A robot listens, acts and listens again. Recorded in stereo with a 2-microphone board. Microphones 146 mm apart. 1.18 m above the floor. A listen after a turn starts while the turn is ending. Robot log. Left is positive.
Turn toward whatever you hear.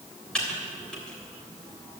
cmd yaw +30
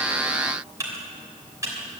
note: So it is at 25° right.
cmd yaw -25
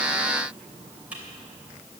note: The typing on a keyboard is now 10° right.
cmd yaw -10
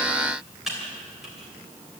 end: Facing the typing on a keyboard.